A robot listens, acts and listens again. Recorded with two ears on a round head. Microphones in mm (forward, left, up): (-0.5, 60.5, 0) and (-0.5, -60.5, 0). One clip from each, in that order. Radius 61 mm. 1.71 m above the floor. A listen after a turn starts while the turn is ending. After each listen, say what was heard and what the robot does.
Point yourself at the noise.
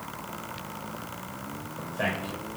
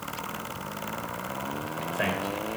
The man speaking: about 40° right or 140° right. Turn 40° right.
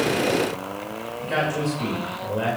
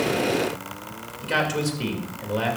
So it is at 100° right. Turn 100° right.
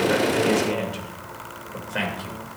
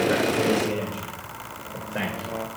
The man speaking is now 45° left. Turn 45° left.
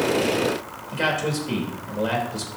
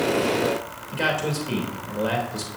Found it: a man speaking, straight ahead, 2 to 4 m away.